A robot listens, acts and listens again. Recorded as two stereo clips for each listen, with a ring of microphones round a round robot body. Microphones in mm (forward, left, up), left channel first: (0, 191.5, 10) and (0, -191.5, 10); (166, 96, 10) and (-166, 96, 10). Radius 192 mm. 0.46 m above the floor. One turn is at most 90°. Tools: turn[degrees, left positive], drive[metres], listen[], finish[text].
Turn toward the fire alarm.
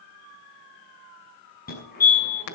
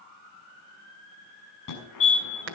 Thought: The fire alarm: 25° left.
Action: turn[25]
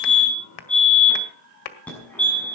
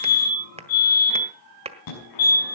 Action: finish[Facing the fire alarm.]